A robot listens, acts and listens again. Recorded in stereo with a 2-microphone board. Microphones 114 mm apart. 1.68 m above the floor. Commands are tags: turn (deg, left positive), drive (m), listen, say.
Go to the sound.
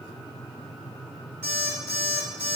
<turn deg="20"/>
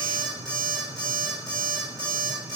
<drive m="1.0"/>
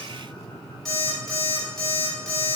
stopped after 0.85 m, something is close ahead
<say>Arrived at the alarm clock, straight ahead.</say>